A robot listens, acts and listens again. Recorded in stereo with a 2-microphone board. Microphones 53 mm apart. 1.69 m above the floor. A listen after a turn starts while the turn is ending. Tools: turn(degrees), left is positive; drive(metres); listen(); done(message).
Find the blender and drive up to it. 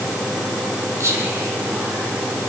listen()
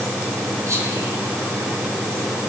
listen()
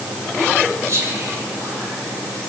done("I can't make out a blender, only whispering.")